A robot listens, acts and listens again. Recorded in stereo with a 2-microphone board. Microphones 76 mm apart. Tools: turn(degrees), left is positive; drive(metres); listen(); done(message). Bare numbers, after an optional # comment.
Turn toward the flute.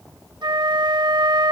# The flute: about 70° right or 110° right.
turn(-70)
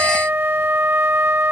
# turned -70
# So it is at 30° right.
turn(-30)
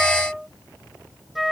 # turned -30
done("Found it: a flute, straight ahead.")